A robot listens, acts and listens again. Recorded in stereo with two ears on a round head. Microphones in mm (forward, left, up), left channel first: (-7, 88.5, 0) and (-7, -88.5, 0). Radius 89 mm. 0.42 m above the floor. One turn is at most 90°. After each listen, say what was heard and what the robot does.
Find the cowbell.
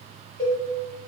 The cowbell: about 25° left or 155° left. Turn 25° left.
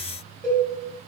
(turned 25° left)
Found it: a cowbell, straight ahead, 2 to 4 m away.